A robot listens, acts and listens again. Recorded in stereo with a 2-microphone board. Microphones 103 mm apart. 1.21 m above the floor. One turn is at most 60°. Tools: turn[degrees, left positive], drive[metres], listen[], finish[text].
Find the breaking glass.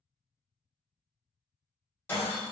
Thought: The breaking glass: about 20° left or 160° left.
Action: turn[20]
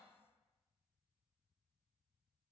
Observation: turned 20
Action: listen[]
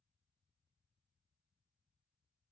Action: finish[I heard breaking glass, but can't make it out now. It was about straight ahead or 140° left.]